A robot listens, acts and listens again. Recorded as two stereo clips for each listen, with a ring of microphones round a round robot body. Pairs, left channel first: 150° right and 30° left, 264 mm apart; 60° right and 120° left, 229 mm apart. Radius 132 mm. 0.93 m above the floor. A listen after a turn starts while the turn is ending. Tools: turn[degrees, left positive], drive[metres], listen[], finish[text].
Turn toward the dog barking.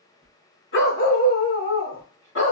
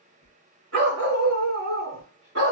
Thought: The dog barking: 170° left.
Action: turn[170]
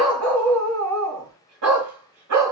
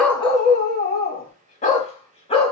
Action: finish[Facing the dog barking.]